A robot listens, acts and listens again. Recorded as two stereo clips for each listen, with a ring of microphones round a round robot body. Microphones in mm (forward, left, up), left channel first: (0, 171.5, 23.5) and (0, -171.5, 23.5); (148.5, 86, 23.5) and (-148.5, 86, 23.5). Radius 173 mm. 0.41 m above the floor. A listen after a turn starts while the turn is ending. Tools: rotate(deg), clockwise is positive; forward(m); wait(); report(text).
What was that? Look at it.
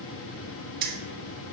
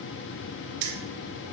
rotate(155)
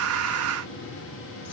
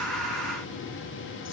wait()
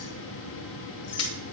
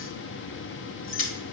rotate(-45)
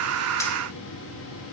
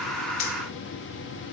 wait()
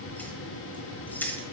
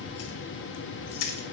report("Facing the keys jangling, 1 to 2 m away.")